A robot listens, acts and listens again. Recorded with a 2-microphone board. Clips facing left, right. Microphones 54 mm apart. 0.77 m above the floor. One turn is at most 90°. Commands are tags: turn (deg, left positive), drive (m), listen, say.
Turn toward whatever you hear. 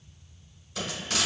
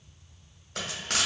<turn deg="-55"/>
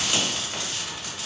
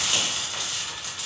<say>Facing the frying.</say>